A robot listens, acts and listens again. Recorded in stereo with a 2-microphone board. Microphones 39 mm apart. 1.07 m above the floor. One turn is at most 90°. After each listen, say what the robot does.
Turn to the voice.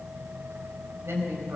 Turn 90° right.
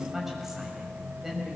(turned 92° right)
Facing the woman speaking, over 4 m away.